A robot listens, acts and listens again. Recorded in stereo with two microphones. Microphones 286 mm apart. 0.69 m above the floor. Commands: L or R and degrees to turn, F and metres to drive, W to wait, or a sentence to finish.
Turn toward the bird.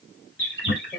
L40
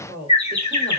L100
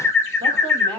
L10
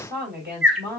Facing the bird.